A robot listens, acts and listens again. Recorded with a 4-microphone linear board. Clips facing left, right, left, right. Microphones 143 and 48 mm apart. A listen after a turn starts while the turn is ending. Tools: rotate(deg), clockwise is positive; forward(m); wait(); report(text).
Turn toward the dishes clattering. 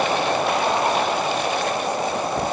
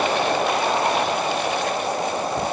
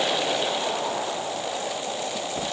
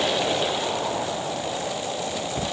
wait()
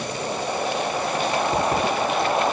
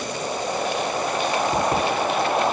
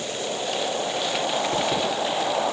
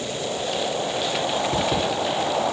wait()
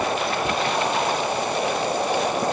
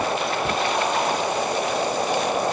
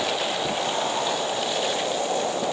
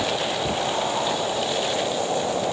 report("I can't make out dishes clattering.")